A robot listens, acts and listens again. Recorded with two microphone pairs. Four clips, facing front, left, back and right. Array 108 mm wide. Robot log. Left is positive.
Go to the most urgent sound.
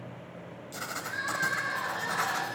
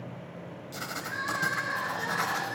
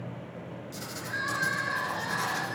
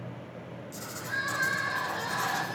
note: The crying: 70° right.
cmd yaw -70
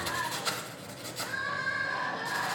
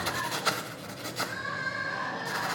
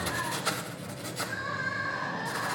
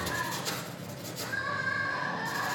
cmd fwd 1.0
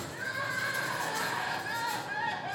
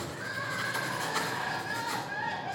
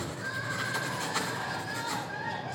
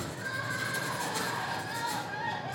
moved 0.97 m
cmd fwd 1.0
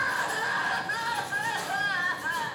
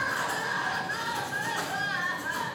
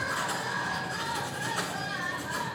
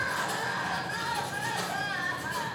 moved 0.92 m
cmd fwd 1.0
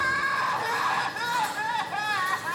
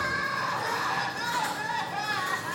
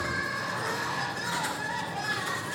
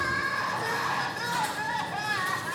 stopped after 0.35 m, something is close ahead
end: I am next to the crying.